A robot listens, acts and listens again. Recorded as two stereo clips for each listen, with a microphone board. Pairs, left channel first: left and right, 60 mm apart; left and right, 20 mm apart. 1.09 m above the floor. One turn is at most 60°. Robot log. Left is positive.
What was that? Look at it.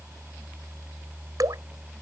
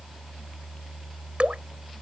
note: The dripping: about 75° right or 105° right.
cmd yaw -60
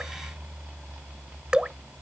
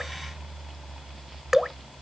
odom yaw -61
note: So it is at 15° right.
cmd yaw -15
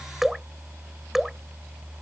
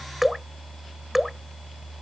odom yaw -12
end: Facing the dripping.